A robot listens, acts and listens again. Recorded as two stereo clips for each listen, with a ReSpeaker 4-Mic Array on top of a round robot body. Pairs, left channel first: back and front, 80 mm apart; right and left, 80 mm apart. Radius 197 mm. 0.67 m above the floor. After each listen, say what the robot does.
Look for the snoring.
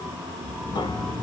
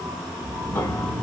Turn 95° left.
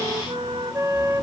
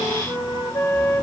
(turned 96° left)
Keep listening.
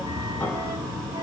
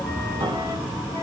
Facing the snoring, 1 to 2 m away.